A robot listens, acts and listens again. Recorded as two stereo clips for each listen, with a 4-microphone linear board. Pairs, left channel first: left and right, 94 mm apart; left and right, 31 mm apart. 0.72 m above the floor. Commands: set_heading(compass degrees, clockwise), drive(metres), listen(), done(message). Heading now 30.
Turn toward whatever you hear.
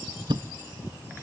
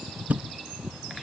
set_heading(85)
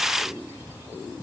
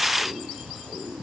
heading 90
listen()
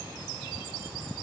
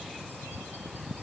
done("I heard a thud, but can't make it out now. It was about 5° left or 65° right.")